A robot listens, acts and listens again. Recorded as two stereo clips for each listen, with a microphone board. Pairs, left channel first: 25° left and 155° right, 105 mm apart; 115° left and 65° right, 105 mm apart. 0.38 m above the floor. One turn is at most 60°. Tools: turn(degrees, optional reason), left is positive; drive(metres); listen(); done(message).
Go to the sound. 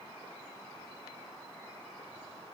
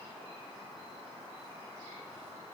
listen()
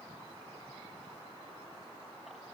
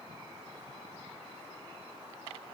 listen()
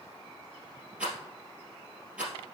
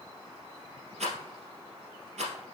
turn(degrees=-60, reason="The rattle: 75° right.")
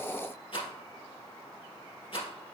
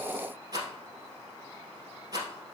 turn(degrees=-15, reason="The rattle is now 15° right.")
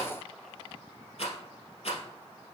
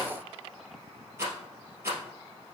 drive(metres=1.0)
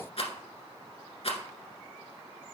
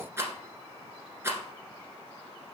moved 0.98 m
drive(metres=1.0)
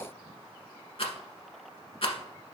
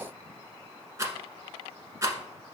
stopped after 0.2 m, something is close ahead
done("Arrived at the rattle, straight ahead.")